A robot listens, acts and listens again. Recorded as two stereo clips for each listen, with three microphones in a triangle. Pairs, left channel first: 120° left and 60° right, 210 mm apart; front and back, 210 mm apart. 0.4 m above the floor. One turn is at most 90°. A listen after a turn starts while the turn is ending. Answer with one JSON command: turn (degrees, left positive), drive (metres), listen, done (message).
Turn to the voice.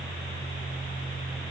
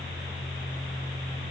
{"listen": true}
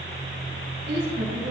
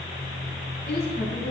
{"turn": -35}
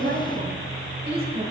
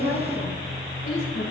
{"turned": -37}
{"done": "Found it: a woman speaking, straight ahead."}